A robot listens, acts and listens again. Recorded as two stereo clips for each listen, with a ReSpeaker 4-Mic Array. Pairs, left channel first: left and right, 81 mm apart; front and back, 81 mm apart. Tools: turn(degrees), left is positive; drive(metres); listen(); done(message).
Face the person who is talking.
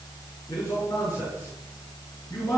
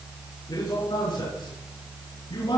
turn(degrees=35)
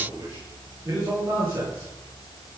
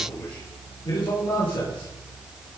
turn(degrees=-25)
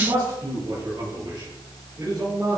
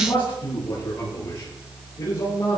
turn(degrees=-30)
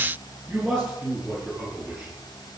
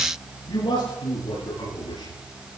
done("Found it: a man speaking, straight ahead, over 4 m away.")